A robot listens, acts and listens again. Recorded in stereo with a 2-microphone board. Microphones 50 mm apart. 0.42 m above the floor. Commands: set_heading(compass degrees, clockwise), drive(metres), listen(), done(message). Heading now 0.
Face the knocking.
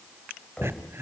set_heading(335)
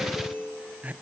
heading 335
listen()
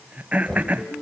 done("Found it: knocking, straight ahead.")